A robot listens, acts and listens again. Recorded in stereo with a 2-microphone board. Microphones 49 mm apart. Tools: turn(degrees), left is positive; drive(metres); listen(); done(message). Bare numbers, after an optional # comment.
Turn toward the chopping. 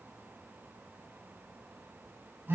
listen()
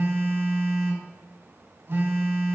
listen()
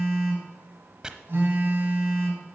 # The chopping: about 15° right or 165° right.
turn(-15)
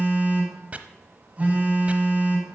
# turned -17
# So it is at 150° right.
turn(-150)
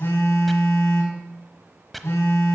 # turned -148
done("Facing the chopping.")